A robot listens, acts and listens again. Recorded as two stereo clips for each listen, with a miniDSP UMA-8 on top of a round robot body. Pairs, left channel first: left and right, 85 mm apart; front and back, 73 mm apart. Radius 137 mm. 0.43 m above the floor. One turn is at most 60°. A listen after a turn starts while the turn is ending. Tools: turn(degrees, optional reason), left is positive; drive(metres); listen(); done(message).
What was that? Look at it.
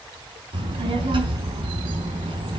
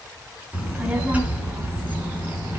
turn(degrees=-60, reason="The child speaking: 115° right.")
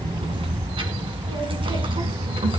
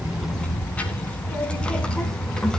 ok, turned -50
turn(degrees=-60, reason="The child speaking is now 80° right.")
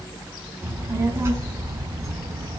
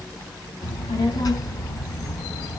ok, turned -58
turn(degrees=-35, reason="The child speaking is now 35° right.")
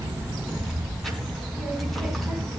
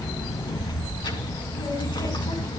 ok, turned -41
done("Found it: a child speaking, straight ahead.")